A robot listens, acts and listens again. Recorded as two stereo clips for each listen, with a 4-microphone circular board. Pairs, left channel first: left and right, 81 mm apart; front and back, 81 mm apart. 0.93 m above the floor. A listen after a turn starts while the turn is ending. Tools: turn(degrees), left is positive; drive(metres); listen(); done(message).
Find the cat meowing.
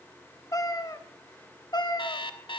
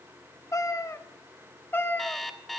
turn(degrees=65)
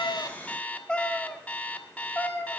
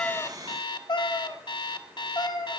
turn(degrees=25)
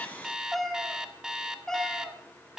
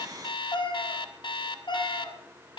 turn(degrees=10)
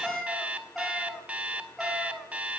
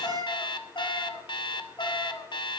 done("Found it: a cat meowing, straight ahead, 2 to 4 m away.")